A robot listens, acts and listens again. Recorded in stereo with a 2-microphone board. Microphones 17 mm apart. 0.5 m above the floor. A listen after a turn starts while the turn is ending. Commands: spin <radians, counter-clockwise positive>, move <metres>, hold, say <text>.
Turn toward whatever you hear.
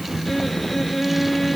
spin 0.52
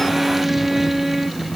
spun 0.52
spin -0.26
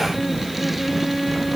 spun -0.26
say Facing the violin.